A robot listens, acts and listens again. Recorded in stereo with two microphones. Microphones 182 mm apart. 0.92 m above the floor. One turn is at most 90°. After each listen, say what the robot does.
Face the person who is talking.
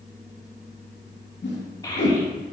Turn 20° left.
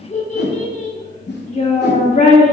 Turn 90° left.
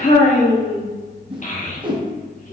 Turn 45° left.
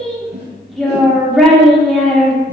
Found it: a child speaking, straight ahead.